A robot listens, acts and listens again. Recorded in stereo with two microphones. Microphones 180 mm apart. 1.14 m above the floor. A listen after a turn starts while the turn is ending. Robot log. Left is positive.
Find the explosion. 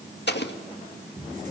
note: The explosion: about 70° left or 110° left.
cmd yaw +70
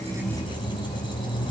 cmd idle
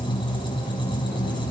end: I heard an explosion, but can't make it out now. It was about straight ahead or 40° left.